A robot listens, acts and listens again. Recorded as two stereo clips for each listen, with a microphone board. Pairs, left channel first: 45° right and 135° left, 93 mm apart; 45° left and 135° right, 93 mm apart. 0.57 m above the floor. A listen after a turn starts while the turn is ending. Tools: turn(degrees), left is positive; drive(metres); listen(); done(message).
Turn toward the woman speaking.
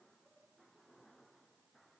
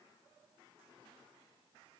listen()
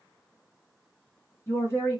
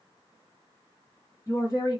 turn(degrees=10)
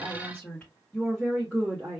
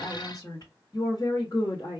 turn(degrees=45)
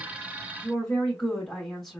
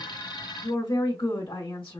turn(degrees=35)
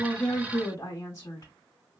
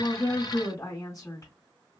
done("Facing the woman speaking, 1 to 2 m away.")